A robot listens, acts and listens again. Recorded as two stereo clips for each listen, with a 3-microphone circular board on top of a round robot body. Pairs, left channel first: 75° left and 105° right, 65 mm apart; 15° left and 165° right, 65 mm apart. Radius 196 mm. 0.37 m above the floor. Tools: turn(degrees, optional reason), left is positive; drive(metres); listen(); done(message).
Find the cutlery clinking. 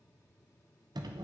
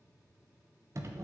listen()
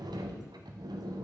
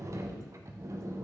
listen()
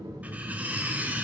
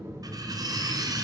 turn(degrees=-170, reason="The cutlery clinking: 170° right.")
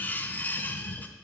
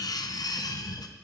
turn(degrees=10, reason="The cutlery clinking is now 10° left.")
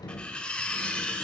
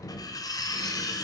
done("Found it: cutlery clinking, straight ahead, 1 to 2 m away.")